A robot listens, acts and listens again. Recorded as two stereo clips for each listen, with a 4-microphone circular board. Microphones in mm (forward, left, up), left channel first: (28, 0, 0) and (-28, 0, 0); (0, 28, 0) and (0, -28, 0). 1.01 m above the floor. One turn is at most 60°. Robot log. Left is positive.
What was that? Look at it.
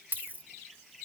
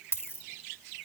note: The dropped coin: 130° left.
cmd yaw +60
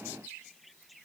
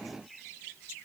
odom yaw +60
note: Nothing new. It was at 70° left.
cmd yaw +60
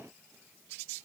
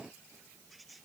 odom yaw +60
note: Nothing new. It was at 10° left.
cmd yaw +10
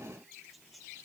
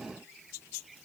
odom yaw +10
end: Facing where the dropped coin came from. I can't hear it now.